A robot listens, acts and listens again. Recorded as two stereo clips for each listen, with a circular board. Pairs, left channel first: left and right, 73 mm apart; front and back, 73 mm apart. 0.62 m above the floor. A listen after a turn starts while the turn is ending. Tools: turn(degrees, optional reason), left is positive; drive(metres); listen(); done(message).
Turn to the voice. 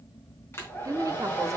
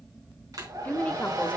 turn(degrees=-65, reason="The woman speaking: 65° right.")
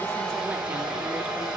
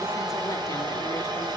listen()
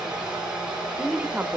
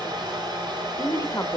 turn(degrees=-25, reason="The woman speaking is now 25° right.")
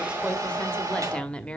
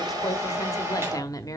turn(degrees=15, reason="The woman speaking is now 15° left.")
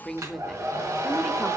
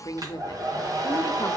done("Facing the woman speaking, 1 to 2 m away.")